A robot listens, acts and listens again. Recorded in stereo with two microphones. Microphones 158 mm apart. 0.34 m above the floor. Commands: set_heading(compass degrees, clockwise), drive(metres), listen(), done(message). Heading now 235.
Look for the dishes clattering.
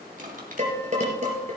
set_heading(280)
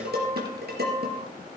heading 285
set_heading(10)
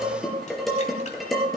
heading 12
done("Found it: dishes clattering, straight ahead.")